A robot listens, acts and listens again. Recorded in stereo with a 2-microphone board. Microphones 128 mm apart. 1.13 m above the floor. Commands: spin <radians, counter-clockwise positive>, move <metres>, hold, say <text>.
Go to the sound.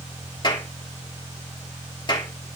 spin 0.61
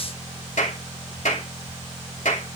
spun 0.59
spin 1.92
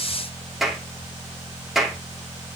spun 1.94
move 1.0
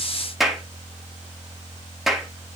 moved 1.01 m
move 1.0
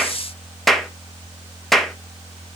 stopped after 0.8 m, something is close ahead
say Arrived at the clap, straight ahead.